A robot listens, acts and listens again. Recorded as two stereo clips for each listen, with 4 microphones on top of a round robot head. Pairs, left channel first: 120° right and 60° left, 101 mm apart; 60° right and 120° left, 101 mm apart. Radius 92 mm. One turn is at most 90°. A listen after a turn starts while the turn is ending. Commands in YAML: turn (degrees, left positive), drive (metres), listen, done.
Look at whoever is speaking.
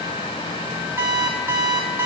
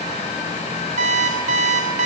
listen: true
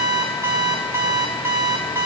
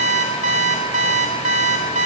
listen: true
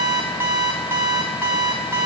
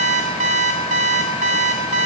done: "I can't make out anyone speaking, only an alarm clock."